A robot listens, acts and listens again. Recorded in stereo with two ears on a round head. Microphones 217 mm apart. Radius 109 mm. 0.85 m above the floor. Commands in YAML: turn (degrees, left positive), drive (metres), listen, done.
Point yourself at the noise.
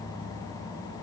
listen: true
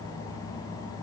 listen: true
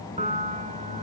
turn: -30
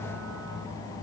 listen: true
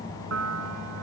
turn: -120
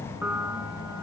turn: -10
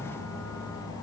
listen: true
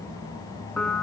done: "Found it: a piano, straight ahead, 2 to 4 m away."